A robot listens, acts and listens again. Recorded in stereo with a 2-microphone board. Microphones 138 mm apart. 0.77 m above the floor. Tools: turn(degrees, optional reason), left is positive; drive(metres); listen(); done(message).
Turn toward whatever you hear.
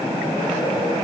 listen()
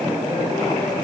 listen()
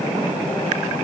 done("I can't make out anything to turn to.")